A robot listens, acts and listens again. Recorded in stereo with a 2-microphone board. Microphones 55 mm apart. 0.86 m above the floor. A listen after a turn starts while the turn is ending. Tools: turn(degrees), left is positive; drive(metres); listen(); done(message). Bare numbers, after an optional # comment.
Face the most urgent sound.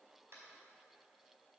listen()
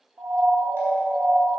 # The siren: about 70° right or 110° right.
turn(-70)
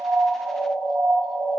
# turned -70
# So it is at 40° right.
turn(-40)
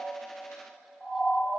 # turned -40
done("Facing the siren, 2 to 4 m away.")